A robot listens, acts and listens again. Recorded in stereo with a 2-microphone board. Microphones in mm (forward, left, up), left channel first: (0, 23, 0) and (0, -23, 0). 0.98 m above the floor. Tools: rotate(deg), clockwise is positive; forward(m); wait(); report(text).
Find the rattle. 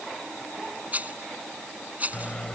rotate(35)
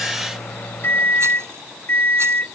wait()
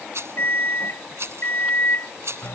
rotate(110)
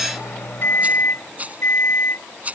rotate(35)
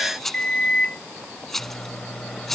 report("Facing the rattle.")